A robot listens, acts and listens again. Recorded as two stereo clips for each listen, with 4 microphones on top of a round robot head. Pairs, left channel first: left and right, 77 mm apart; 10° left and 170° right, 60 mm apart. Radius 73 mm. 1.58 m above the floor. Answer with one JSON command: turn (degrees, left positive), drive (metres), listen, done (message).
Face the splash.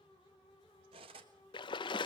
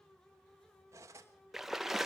{"turn": 105}
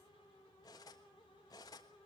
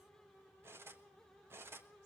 {"done": "Facing where the splash came from. I can't hear it now."}